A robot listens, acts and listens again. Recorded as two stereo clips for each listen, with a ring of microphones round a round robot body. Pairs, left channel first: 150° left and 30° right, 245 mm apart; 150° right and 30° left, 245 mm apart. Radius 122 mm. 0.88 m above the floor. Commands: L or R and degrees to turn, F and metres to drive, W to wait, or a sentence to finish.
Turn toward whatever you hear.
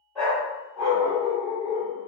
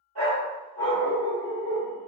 L60
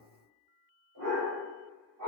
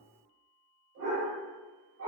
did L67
Facing the dog barking.